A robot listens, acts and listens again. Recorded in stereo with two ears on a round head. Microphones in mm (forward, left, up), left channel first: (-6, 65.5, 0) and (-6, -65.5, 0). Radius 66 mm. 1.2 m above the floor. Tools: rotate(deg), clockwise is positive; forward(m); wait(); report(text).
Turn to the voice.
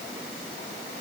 wait()
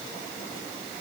wait()
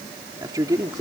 rotate(25)
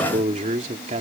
rotate(130)
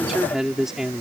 report("Facing the man speaking.")